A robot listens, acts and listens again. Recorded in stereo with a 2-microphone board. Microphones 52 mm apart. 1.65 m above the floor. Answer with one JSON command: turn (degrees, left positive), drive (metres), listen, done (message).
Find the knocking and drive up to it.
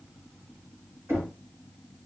{"turn": -50}
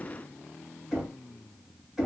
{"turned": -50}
{"drive": 1.0}
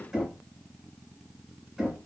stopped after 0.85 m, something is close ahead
{"turn": -10}
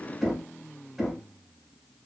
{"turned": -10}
{"done": "I am next to the knocking."}